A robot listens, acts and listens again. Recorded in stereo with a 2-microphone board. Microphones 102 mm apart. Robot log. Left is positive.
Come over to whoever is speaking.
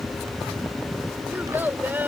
note: The child speaking: about 20° right or 160° right.
cmd yaw -20
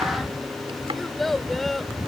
cmd fwd 1.0
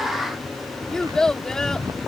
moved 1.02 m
cmd fwd 1.0
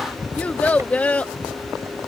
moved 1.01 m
note: The child speaking is now 15° left.
cmd yaw +15
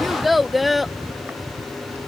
cmd fwd 1.0
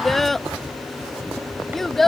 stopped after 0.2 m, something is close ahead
end: Arrived at the child speaking, straight ahead.